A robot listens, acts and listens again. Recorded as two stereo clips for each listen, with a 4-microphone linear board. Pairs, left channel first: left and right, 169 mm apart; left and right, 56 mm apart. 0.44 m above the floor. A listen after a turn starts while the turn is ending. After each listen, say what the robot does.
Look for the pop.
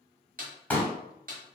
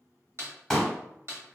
Turn 30° left.
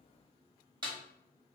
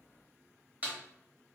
Keep listening.
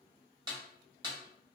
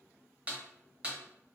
I heard a pop, but can't make it out now. It was about 20° right or 140° left.